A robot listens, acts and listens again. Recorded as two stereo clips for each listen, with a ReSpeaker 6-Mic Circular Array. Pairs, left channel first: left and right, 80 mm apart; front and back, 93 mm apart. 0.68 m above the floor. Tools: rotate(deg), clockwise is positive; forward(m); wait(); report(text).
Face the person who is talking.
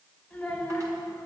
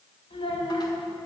rotate(-10)
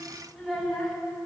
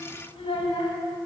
report("Found it: a child speaking, straight ahead, 2 to 4 m away.")